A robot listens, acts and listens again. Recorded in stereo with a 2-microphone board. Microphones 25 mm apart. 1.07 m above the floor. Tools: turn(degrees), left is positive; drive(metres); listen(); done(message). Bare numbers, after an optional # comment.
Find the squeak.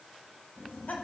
listen()
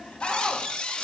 # The squeak: about 40° left or 140° left.
turn(40)
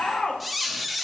done("Facing the squeak.")